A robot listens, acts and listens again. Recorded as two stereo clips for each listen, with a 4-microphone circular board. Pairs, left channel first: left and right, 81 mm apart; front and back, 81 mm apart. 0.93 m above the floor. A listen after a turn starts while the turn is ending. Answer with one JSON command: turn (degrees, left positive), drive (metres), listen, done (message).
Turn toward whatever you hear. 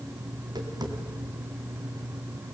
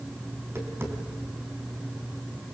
{"turn": -120}
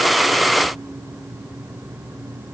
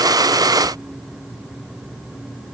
{"listen": true}
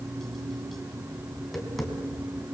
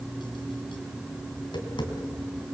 {"done": "Facing the tapping."}